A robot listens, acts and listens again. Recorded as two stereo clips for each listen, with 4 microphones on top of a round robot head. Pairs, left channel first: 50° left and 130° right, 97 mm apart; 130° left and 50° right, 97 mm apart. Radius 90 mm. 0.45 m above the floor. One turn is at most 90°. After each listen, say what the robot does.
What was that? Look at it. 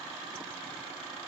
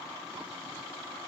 Keep listening.
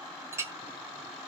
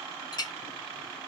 Turn 90° left.
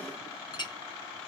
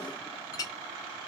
Turn 85° left.
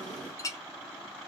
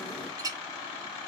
Found it: a clink, straight ahead, under 1 m away.